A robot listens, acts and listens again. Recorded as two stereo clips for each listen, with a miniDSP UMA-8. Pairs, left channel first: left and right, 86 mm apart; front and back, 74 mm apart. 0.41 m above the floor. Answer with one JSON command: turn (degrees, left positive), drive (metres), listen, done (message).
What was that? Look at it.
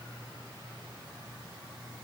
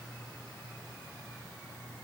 {"listen": true}
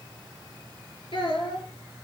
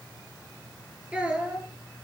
{"turn": 105}
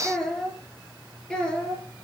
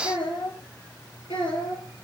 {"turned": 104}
{"turn": 10}
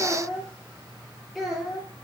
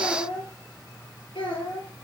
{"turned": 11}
{"done": "Facing the child speaking, over 4 m away."}